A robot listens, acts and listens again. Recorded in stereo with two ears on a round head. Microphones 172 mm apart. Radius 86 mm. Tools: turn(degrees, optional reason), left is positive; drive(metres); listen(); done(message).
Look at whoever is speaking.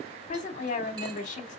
turn(degrees=40, reason="The woman speaking: about 40° left or 140° left.")
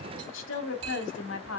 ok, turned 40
turn(degrees=95, reason="So it is at 95° left.")
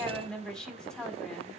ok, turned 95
done("Facing the woman speaking.")